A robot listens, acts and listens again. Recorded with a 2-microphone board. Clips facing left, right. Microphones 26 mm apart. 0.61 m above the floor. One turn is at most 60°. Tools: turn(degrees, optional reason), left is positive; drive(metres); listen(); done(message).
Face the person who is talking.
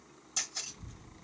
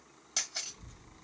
turn(degrees=30)
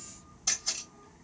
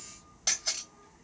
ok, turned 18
done("Found it: a child speaking, straight ahead, 1 to 2 m away.")